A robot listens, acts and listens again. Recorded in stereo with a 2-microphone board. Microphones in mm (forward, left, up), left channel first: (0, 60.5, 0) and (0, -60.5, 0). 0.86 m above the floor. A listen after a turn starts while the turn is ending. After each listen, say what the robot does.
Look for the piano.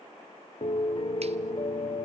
Turn 40° left.
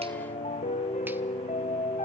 Turn 95° left.
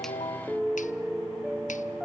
Facing the piano, 1 to 2 m away.